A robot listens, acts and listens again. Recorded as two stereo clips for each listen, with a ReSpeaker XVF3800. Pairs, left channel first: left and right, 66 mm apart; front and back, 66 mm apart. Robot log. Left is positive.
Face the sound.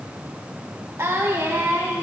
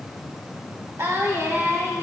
note: The singing: 135° right.
cmd yaw -135
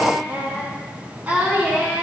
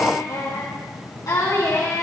note: The singing is now 25° right.
cmd yaw -25
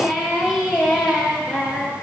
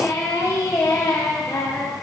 end: Found it: singing, straight ahead, 2 to 4 m away.